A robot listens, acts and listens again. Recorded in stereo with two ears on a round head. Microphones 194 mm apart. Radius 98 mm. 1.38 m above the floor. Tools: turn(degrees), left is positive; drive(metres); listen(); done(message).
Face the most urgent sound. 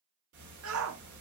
turn(degrees=-70)
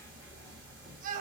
turn(degrees=-40)
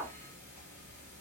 done("Facing the shout, under 1 m away.")